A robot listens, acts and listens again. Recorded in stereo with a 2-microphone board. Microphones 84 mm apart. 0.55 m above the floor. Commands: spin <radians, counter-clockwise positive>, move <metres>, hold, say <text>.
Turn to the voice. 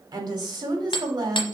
spin -0.96
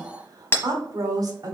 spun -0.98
spin -0.96
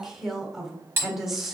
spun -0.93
say Found it: a woman speaking, straight ahead.